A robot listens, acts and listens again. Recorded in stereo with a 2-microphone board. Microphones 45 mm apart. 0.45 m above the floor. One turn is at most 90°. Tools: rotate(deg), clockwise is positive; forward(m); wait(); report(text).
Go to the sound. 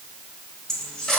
rotate(-15)
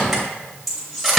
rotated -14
forward(1.0)
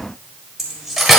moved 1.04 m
forward(1.0)
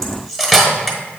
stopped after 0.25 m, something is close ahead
report("Arrived at the cutlery clinking, straight ahead.")